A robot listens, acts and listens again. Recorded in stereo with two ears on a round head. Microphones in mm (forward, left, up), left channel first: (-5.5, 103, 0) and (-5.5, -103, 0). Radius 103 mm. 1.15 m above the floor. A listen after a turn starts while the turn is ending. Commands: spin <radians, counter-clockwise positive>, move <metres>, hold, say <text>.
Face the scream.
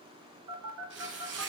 hold
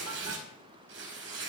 hold
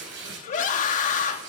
spin 0.61
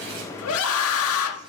spin 1.92
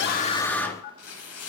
spin 0.17
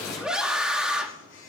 say Found it: a scream, straight ahead.